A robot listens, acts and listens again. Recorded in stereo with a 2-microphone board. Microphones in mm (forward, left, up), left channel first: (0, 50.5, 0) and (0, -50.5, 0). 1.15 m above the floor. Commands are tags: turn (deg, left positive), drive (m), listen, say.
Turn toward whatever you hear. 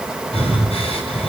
<turn deg="90"/>
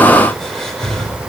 <say>Found it: breathing, straight ahead.</say>